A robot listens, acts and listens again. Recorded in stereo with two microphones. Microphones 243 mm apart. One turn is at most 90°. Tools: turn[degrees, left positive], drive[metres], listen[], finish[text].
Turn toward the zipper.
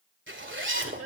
Thought: The zipper: about 50° right or 130° right.
Action: turn[-50]
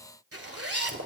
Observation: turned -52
Thought: So it is at 75° right.
Action: turn[-75]
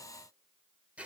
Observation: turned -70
Action: finish[Facing the zipper.]